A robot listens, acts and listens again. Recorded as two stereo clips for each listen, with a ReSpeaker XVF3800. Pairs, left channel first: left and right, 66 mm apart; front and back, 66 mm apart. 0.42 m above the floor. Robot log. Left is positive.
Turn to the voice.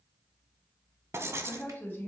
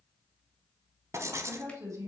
note: The woman speaking: 150° left.
cmd yaw +150
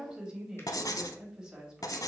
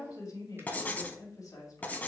note: The woman speaking is now 10° right.
cmd yaw -10
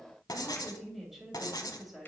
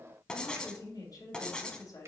end: Found it: a woman speaking, straight ahead, 2 to 4 m away.